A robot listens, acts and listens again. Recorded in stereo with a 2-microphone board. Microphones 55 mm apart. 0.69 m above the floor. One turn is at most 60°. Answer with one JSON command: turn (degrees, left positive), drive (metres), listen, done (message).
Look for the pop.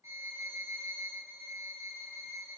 {"listen": true}
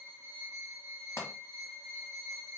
{"turn": 60}
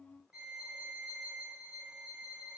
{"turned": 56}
{"listen": true}
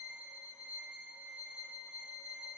{"done": "I heard a pop, but can't make it out now. It was about 10° left or 55° left."}